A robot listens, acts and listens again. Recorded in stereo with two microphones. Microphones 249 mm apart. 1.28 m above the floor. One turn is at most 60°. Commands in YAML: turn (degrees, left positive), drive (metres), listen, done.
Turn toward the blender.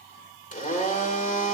turn: 35
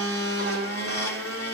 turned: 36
turn: 60
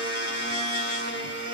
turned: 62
turn: 50
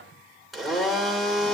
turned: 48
done: "Facing the blender."